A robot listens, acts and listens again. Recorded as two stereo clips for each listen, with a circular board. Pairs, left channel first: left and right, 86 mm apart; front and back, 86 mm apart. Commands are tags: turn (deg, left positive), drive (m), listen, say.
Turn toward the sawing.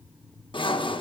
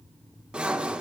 <turn deg="105"/>
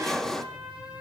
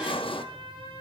<say>Found it: sawing, straight ahead, under 1 m away.</say>